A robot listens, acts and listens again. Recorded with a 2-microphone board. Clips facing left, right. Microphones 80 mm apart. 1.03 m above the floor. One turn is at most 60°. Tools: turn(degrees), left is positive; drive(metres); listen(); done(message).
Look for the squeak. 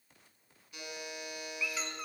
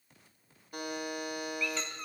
turn(degrees=30)
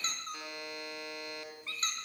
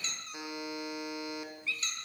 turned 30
turn(degrees=60)
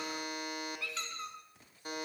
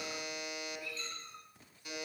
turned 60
turn(degrees=60)
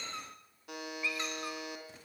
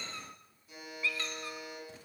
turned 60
turn(degrees=20)
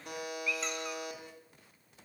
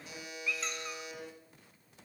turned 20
done("Facing the squeak, 2 to 4 m away.")